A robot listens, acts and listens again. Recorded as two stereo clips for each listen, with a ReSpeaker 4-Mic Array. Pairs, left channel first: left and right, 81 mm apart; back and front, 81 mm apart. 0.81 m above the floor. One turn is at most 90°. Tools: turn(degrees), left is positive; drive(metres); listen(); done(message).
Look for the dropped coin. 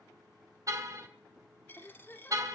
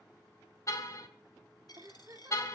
turn(degrees=90)
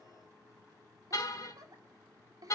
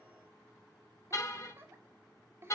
turn(degrees=60)
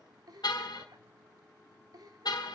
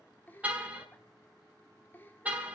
done("I heard a dropped coin from this way, but can't make it out now.")